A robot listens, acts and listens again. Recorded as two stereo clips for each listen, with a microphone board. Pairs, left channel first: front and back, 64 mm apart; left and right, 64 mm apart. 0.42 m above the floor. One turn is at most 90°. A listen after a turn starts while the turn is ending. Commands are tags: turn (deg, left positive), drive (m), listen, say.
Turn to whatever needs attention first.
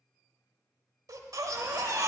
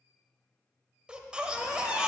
<turn deg="-90"/>
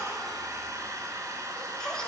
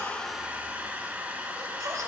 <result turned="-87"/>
<turn deg="-75"/>
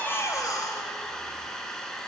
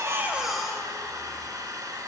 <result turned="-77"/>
<say>Found it: a baby crying, straight ahead, under 1 m away.</say>